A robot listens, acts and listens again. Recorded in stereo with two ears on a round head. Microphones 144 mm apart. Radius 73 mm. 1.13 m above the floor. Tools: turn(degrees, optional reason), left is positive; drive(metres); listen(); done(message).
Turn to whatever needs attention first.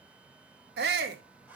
turn(degrees=-70, reason="The shout: about 70° right or 110° right.")
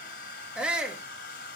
done("Found it: a shout, straight ahead, 2 to 4 m away.")